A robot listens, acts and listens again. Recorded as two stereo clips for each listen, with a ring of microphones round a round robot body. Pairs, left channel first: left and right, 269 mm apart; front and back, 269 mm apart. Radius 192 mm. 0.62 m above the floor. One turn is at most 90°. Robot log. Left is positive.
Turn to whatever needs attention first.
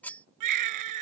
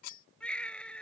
note: The baby crying: 90° right.
cmd yaw -90
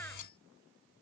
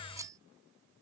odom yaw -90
cmd idle
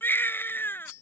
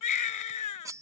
end: Facing the baby crying.